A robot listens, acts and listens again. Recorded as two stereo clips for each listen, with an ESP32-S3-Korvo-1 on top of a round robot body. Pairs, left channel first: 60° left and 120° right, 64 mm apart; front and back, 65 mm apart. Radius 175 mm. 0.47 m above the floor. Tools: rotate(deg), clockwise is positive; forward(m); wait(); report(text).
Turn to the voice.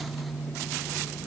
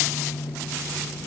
wait()
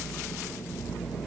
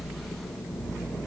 wait()
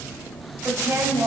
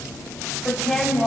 rotate(90)
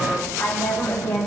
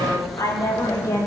report("Found it: a woman speaking, straight ahead, over 4 m away.")